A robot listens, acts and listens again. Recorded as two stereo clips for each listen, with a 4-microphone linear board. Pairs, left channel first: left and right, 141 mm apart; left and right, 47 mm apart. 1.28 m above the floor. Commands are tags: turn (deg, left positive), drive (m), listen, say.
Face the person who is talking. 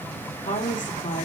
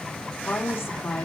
<turn deg="65"/>
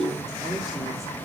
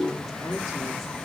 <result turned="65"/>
<listen/>
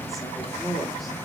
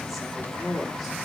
<say>Found it: a woman speaking, straight ahead.</say>